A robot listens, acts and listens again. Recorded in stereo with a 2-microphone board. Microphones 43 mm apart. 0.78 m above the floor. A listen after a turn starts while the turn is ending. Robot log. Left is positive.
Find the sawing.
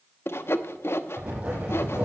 note: The sawing: about 65° left or 115° left.
cmd yaw +65
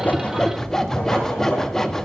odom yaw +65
note: So it is at 10° left.
cmd yaw +10
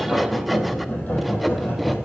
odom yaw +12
cmd idle
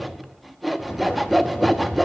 end: Facing the sawing, under 1 m away.